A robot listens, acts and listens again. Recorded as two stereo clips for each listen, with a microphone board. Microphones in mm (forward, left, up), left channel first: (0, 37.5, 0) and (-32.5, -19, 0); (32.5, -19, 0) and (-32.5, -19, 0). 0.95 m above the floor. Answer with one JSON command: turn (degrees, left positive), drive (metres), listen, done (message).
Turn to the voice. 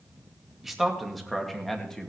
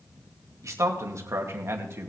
{"turn": 140}
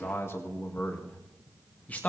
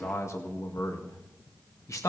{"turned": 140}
{"done": "Found it: a man speaking, straight ahead, 1 to 2 m away."}